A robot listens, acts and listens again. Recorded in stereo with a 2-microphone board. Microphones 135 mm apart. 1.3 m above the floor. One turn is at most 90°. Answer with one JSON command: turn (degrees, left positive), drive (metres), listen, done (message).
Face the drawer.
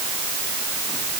{"listen": true}
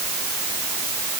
{"listen": true}
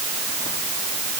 {"done": "I can't make out a drawer."}